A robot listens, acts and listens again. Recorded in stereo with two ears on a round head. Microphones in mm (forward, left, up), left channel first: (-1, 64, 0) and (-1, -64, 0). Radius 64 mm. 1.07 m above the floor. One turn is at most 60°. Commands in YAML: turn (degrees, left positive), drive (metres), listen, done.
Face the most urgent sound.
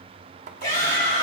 turn: 60
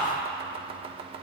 turn: 30
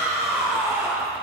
turn: -20
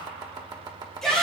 done: "Found it: a shout, straight ahead."